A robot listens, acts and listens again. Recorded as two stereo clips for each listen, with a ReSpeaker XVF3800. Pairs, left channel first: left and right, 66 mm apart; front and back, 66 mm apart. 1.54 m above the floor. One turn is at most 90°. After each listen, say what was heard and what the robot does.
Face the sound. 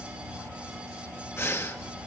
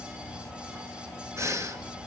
The breathing: 140° left. Turn 90° left.
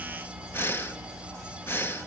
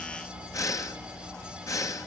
The breathing is now 35° left. Turn 35° left.
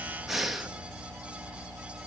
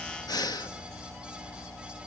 Facing the breathing.